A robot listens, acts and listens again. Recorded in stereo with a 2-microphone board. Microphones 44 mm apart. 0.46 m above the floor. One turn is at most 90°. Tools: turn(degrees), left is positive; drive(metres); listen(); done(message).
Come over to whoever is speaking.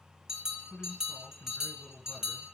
turn(degrees=25)
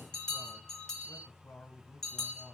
turn(degrees=90)
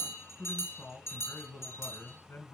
turn(degrees=55)
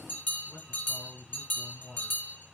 turn(degrees=10)
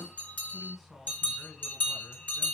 drive(metres=1.0)
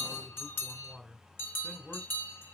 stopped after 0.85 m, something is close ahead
done("Arrived at the man speaking, straight ahead.")